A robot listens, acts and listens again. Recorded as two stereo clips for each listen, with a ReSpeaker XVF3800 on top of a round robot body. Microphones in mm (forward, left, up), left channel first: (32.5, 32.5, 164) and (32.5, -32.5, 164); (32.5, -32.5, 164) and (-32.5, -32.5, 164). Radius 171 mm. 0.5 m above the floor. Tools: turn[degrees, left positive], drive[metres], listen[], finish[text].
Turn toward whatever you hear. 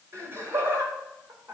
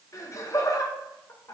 Thought: The laughter: 40° right.
Action: turn[-40]
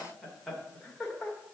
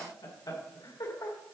Thought: The laughter is now 10° left.
Action: turn[10]
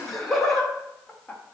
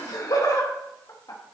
Thought: The laughter is now 15° left.
Action: turn[15]
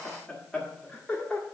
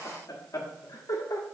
Thought: The laughter is now 15° left.
Action: turn[15]
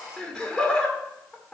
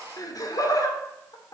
Action: finish[Facing the laughter.]